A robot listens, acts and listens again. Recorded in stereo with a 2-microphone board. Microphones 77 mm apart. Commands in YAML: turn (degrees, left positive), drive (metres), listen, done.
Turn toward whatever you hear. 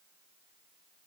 listen: true
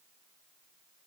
listen: true
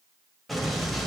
turn: 30
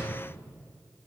turn: -30
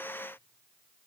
done: "I heard an explosion from this way, but can't make it out now."